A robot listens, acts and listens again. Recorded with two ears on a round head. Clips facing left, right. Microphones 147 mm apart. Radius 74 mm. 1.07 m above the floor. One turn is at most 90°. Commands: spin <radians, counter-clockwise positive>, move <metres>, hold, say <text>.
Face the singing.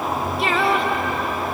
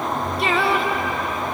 spin 0.52
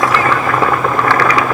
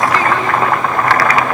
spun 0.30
hold
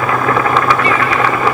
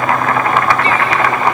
hold
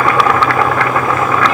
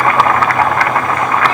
say I heard singing, but can't make it out now. It was about 20° right or 165° left.